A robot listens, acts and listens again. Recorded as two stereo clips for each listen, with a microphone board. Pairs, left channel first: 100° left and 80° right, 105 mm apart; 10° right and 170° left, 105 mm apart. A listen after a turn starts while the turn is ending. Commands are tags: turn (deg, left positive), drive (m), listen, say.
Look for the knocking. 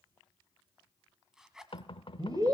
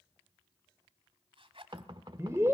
<turn deg="130"/>
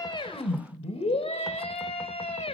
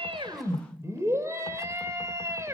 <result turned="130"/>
<listen/>
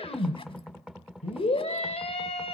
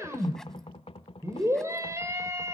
<say>Facing the knocking, 1 to 2 m away.</say>